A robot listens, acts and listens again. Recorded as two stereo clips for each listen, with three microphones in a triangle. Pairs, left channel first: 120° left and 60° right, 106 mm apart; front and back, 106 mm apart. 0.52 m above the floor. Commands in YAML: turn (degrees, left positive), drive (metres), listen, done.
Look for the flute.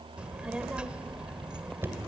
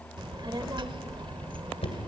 listen: true
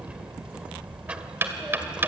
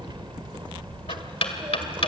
listen: true
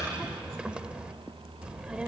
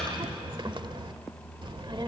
done: "I can't make out a flute, only knocking and a child speaking."